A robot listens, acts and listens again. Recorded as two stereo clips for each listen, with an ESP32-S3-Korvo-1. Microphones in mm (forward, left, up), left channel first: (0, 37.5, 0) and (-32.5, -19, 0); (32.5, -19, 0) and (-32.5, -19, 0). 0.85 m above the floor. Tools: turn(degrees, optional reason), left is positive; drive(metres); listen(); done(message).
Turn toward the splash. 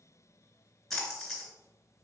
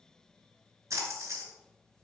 turn(degrees=145, reason="The splash: 145° left.")
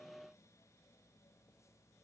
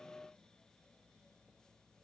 done("I heard a splash from this way, but can't make it out now.")